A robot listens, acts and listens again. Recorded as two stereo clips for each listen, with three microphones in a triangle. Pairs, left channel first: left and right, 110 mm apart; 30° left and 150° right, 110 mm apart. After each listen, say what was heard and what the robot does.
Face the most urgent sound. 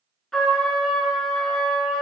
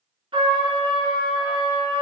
Keep listening.
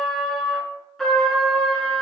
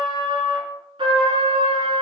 Keep listening.
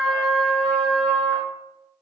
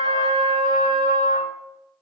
I can't make out anything urgent to turn to.